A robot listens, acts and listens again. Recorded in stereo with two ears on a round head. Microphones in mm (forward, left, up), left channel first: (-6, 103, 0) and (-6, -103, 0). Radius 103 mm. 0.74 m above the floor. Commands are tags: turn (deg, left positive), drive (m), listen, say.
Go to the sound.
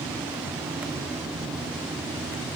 <listen/>
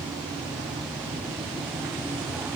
<listen/>
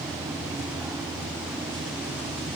<say>I can't make out anything to turn to.</say>